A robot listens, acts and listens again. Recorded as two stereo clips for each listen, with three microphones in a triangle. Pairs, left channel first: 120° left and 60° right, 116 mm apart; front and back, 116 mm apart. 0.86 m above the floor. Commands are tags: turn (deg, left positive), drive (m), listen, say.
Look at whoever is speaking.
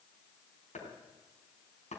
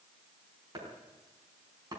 <listen/>
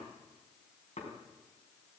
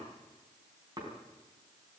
<listen/>
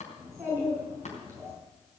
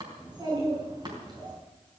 <turn deg="-125"/>
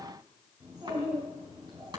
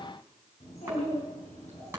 <say>Facing the child speaking, over 4 m away.</say>